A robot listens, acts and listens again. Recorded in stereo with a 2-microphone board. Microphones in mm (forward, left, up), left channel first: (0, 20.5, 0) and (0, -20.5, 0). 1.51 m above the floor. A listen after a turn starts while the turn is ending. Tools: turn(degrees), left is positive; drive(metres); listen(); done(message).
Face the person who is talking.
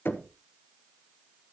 listen()
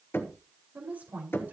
turn(degrees=-40)
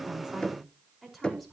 done("Found it: a woman speaking, straight ahead, over 4 m away.")